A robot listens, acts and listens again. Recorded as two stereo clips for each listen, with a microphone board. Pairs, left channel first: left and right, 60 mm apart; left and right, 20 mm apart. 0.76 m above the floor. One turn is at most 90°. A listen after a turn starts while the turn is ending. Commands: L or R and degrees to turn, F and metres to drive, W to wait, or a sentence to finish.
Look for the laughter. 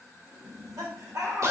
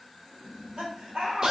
R75
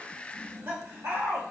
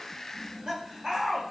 R40
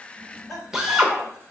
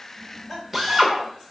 Found it: laughter, straight ahead, 2 to 4 m away.